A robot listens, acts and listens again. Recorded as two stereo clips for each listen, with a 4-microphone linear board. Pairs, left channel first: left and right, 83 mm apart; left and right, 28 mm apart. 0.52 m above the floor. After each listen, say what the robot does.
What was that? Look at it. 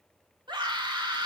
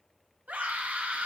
Turn 75° right.
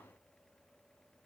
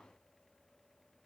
Keep listening.
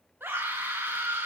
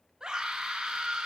Turn 25° right.
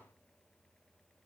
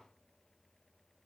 Keep listening.
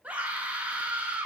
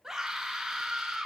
Turn 15° right.
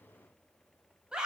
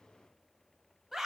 Turn 10° right.
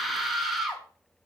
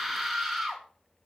Facing the scream.